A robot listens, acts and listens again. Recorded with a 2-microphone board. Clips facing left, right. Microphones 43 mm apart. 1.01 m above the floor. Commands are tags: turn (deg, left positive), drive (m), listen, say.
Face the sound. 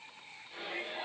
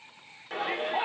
<turn deg="-90"/>
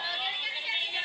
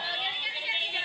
<say>Found it: a shout, straight ahead, 2 to 4 m away.</say>